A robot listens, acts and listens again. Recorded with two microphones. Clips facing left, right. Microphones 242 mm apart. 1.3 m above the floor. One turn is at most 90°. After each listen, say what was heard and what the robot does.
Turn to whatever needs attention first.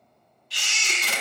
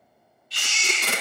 Turn 90° left.
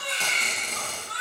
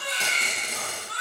Found it: a baby crying, straight ahead, 2 to 4 m away.